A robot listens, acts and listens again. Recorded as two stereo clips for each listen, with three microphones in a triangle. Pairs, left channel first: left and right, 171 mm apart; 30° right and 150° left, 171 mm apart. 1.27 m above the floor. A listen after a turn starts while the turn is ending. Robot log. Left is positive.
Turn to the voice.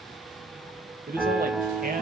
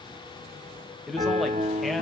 note: The man speaking: 120° right.
cmd yaw -120
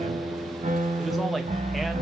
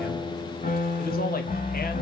cmd idle
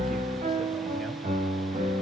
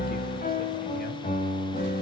cmd idle
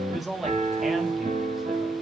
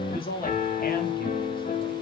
end: Facing the man speaking.